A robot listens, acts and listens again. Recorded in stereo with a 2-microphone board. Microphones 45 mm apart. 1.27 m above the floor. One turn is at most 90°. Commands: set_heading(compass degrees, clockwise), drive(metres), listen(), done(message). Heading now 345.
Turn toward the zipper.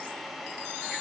listen()
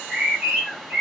listen()
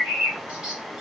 done("I can't make out a zipper to turn to.")